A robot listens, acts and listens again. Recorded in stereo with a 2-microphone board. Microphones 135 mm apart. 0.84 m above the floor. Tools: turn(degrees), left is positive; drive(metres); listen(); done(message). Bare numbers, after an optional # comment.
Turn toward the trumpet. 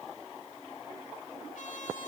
# The trumpet: about 70° left or 110° left.
turn(70)
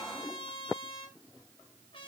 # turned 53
# So it is at 45° left.
turn(45)
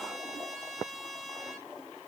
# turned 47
done("Facing the trumpet, 2 to 4 m away.")